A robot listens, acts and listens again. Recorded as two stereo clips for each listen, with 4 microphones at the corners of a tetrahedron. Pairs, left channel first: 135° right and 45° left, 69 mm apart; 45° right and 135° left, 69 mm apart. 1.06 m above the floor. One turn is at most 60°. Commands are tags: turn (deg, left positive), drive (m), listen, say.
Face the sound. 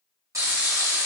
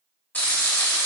<turn deg="15"/>
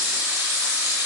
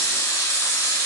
<say>Facing the frying.</say>